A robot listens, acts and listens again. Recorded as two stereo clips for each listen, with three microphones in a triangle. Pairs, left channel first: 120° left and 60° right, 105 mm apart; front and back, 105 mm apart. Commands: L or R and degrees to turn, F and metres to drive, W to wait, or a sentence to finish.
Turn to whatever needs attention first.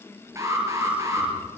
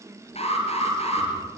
Facing the alarm, over 4 m away.